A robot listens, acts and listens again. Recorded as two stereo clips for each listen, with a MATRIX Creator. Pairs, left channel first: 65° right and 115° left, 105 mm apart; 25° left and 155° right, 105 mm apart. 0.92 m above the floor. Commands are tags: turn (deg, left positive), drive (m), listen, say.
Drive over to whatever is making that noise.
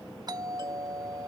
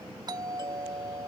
<turn deg="160"/>
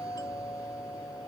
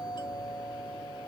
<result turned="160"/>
<turn deg="-20"/>
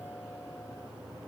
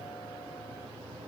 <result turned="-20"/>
<listen/>
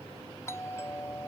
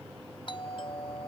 <drive m="1.0"/>
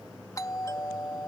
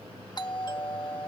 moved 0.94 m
<turn deg="-15"/>
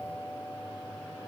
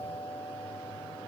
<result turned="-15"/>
<drive m="1.0"/>
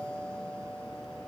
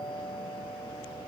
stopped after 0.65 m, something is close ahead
<turn deg="10"/>
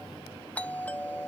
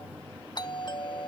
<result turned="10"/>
<say>Arrived at the doorbell, straight ahead.</say>